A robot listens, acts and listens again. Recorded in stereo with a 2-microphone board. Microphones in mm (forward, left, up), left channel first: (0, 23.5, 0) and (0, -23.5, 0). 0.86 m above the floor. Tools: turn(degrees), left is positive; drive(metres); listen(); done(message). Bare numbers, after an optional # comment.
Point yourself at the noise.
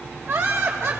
turn(-90)
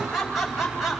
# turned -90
done("Found it: laughter, straight ahead, over 4 m away.")